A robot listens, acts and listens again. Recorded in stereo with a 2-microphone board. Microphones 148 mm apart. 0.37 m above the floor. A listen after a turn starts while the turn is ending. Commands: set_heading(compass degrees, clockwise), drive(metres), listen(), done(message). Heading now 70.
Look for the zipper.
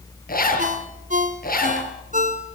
set_heading(340)
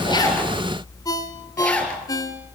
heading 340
set_heading(330)
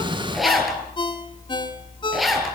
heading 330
done("Facing the zipper.")